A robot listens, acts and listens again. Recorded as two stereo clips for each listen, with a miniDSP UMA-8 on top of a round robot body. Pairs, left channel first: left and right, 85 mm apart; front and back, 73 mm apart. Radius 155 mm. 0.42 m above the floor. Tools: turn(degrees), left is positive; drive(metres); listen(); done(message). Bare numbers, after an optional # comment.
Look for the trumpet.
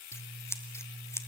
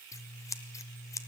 listen()
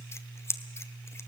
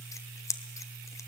listen()
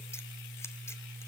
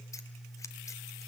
done("I can't make out a trumpet to turn to.")